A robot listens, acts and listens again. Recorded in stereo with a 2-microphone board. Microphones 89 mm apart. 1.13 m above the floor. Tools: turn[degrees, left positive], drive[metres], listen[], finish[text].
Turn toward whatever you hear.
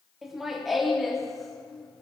Action: turn[30]
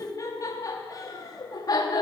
Thought: So it is at 135° left.
Action: turn[135]
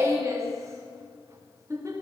Thought: The laughter is now 35° right.
Action: turn[-35]
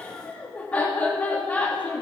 Thought: The laughter is now 15° left.
Action: turn[15]
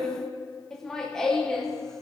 Action: finish[Found it: laughter, straight ahead.]